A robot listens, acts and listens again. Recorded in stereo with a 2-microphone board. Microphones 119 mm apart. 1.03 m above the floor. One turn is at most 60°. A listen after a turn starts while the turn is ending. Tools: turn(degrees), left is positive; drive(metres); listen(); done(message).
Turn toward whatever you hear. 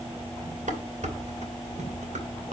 turn(degrees=-60)
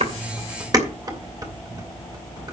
turn(degrees=-35)
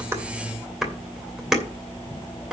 done("Found it: dishes clattering, straight ahead.")